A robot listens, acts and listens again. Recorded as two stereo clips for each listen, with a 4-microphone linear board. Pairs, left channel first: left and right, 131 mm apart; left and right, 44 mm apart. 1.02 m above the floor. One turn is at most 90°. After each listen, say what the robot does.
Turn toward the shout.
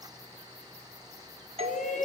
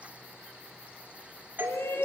Turn 75° left.
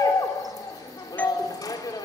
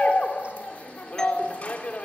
Turn 30° left.
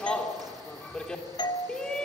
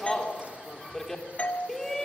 Found it: a shout, straight ahead.